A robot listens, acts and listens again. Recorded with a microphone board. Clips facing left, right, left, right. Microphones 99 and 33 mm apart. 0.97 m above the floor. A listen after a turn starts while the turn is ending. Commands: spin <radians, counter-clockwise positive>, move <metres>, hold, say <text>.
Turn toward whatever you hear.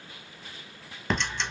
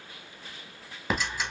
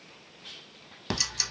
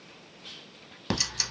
spin -0.52
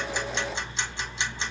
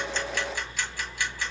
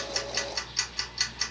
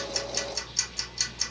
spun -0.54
spin 0.44
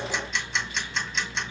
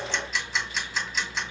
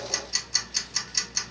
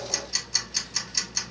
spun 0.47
say Facing the ticking.